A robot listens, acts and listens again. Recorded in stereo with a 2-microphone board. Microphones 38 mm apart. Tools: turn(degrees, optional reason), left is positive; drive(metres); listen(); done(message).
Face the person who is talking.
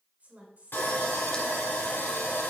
turn(degrees=-40, reason="The woman speaking: about 40° right or 140° right.")
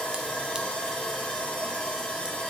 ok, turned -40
listen()
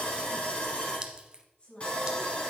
turn(degrees=25, reason="So it is at 25° left.")
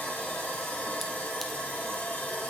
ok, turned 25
listen()
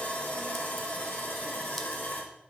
listen()
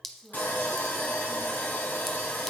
done("Found it: a woman speaking, straight ahead.")